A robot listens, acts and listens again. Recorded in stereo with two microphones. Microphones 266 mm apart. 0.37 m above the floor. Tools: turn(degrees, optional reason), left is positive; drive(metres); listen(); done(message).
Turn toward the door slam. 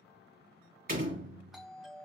turn(degrees=-35, reason="The door slam: about 35° right or 145° right.")
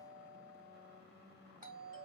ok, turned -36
listen()
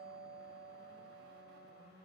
done("I heard a door slam, but can't make it out now. It was about straight ahead or 110° right.")